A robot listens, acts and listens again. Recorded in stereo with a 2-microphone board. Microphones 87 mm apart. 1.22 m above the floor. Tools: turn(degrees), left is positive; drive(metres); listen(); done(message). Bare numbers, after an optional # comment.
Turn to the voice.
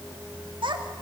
turn(-90)
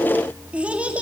# So it is at 15° right.
turn(-15)
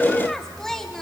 done("Facing the child speaking.")